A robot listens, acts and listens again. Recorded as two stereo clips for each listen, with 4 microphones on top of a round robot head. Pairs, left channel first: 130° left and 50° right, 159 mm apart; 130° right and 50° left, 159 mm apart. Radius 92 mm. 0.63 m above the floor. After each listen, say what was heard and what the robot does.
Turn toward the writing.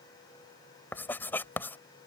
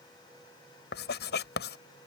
The writing: 150° right. Turn 150° right.
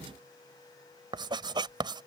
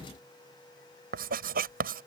The writing is now 15° left. Turn 15° left.
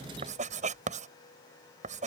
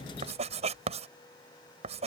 Found it: writing, straight ahead.